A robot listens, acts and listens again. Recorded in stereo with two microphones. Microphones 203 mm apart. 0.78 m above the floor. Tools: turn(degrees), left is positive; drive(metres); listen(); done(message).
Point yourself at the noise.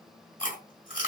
turn(degrees=45)
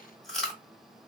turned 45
done("Facing the chewing.")